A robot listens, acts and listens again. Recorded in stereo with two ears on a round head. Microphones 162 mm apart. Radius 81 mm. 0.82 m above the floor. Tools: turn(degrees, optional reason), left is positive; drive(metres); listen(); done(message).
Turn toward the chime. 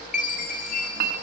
turn(degrees=45, reason="The chime: about 45° left or 135° left.")
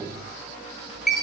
done("Facing the chime.")